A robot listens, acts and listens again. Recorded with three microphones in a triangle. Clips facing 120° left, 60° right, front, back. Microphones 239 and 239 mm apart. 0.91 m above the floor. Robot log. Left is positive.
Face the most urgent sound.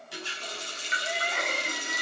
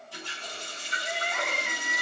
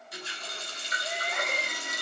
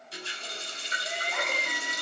note: The crying: 65° left.
cmd yaw +65
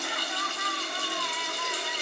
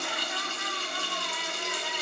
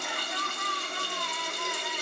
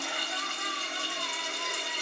note: The crying is now 15° right.
cmd yaw -15
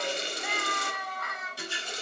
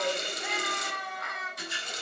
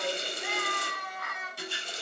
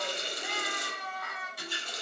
end: Facing the crying, 1 to 2 m away.